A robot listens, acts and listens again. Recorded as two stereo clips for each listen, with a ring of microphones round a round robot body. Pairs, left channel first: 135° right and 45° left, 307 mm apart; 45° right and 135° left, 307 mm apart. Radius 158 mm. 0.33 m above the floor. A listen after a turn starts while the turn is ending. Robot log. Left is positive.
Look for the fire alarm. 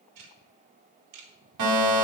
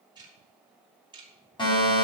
note: The fire alarm: 30° left.
cmd yaw +30
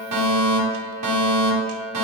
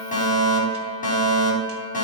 note: The fire alarm is now 20° left.
cmd yaw +20
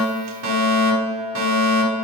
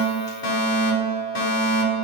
end: Found it: a fire alarm, straight ahead, over 4 m away.